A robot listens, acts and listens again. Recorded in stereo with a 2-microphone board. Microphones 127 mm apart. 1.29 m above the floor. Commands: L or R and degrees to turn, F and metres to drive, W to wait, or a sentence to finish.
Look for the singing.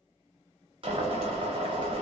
W
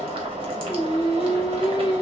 L35
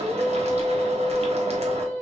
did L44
R10
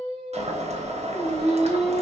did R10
Facing the singing.